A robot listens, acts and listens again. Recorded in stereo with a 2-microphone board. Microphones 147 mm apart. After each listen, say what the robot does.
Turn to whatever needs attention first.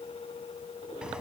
Keep listening.
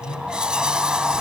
Keep listening.
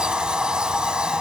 I can't make out anything urgent to turn to.